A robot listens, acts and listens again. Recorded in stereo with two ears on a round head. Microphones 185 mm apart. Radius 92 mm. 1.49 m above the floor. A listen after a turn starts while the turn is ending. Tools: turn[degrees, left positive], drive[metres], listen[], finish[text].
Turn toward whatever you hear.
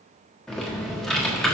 Action: turn[30]
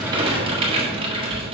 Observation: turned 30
Thought: So it is at 25° right.
Action: turn[-25]
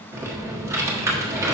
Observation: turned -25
Thought: The typing on a keyboard is now 15° right.
Action: turn[-15]
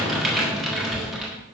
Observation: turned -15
Action: finish[Facing the typing on a keyboard.]